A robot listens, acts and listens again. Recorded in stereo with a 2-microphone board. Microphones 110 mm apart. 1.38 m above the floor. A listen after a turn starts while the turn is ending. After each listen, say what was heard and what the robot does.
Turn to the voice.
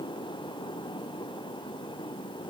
Keep listening.
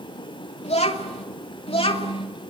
The child speaking: about 55° left or 125° left. Turn 55° left.
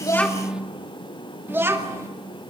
So it is at 25° right. Turn 25° right.
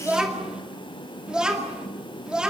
Facing the child speaking.